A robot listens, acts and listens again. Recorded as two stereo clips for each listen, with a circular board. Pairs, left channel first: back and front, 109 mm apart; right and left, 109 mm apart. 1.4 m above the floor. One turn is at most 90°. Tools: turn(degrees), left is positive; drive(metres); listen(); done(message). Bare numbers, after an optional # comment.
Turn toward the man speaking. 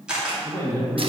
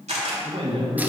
# The man speaking: 115° left.
turn(90)
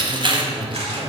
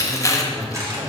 # The man speaking is now 45° left.
turn(45)
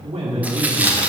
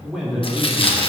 done("Facing the man speaking.")